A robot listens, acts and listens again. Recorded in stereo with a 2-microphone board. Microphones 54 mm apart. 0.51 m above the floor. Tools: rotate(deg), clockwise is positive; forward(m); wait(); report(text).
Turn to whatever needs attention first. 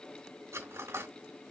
wait()
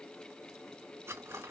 wait()
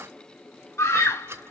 rotate(-70)
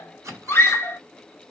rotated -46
rotate(-45)
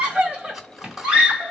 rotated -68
rotate(20)
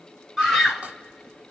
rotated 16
report("Found it: a scream, straight ahead.")